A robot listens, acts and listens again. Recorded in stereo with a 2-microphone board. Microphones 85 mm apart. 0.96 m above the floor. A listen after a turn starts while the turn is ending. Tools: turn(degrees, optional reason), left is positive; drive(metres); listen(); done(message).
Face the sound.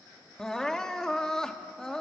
turn(degrees=30)
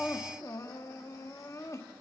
turn(degrees=140, reason="So it is at 140° left.")
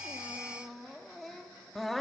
done("Facing the crying.")